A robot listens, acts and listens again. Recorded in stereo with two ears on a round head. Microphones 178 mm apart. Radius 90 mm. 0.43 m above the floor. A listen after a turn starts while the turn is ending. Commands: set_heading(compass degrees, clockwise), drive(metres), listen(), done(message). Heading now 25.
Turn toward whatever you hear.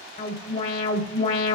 set_heading(345)
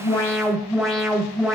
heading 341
done("Facing the alarm.")